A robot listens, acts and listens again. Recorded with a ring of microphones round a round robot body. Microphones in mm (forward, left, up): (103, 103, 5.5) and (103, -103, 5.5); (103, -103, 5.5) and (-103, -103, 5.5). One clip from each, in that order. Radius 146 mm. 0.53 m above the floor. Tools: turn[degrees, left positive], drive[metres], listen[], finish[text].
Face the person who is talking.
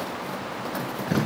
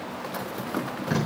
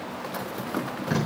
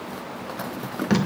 Action: listen[]
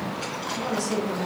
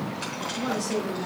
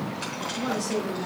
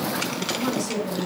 Thought: The woman speaking: 135° left.
Action: turn[135]
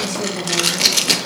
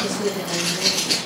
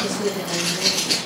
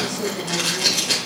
Thought: The woman speaking is now 45° left.
Action: turn[45]
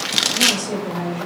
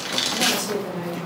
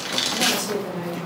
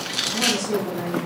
Action: finish[Facing the woman speaking, 2 to 4 m away.]